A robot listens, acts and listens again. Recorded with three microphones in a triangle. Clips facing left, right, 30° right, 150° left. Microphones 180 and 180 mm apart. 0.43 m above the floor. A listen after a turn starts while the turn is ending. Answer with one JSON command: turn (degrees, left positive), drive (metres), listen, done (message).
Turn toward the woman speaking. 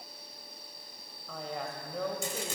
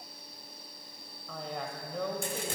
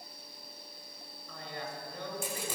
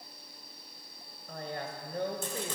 {"turn": 180}
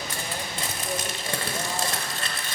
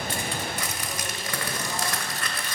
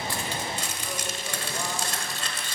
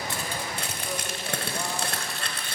{"listen": true}
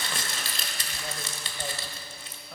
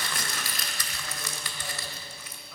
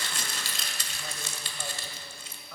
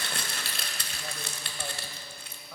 {"listen": true}
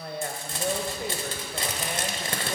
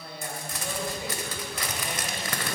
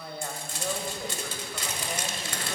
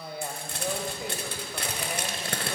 {"turn": 70}
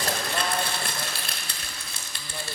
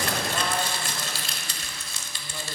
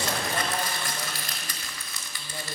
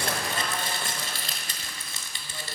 {"listen": true}
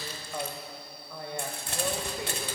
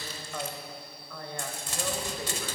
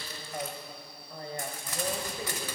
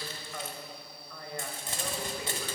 {"turn": 20}
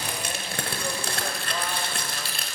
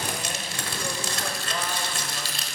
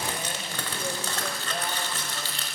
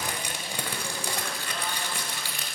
{"listen": true}
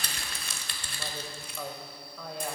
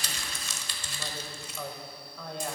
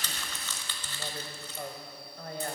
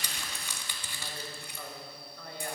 {"done": "Facing the woman speaking, 1 to 2 m away."}